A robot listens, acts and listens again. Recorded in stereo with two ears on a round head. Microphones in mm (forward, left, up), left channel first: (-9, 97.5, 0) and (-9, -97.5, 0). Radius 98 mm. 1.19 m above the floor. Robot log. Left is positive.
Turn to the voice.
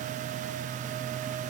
cmd idle
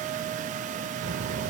note: The child speaking: about 70° right or 110° right.
cmd yaw -70
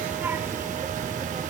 note: So it is at 20° right.
cmd yaw -20
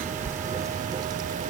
note: The child speaking is now 25° right.
cmd yaw -25
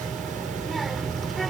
end: Found it: a child speaking, straight ahead.